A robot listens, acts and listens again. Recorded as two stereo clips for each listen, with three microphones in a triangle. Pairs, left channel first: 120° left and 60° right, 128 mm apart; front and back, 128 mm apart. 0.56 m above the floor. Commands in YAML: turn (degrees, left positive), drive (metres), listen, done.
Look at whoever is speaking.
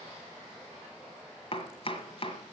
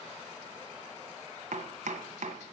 listen: true
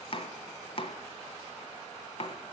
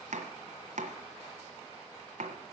listen: true
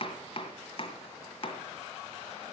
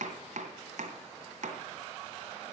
done: "I can't make out anyone speaking to turn to."